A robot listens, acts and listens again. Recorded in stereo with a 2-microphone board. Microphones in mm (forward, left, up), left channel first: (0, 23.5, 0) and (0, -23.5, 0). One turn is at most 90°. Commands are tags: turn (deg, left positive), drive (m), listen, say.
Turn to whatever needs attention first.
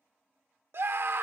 <turn deg="-55"/>
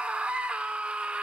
<turn deg="-30"/>
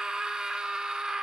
<turn deg="-20"/>
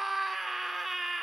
<say>Found it: a scream, straight ahead.</say>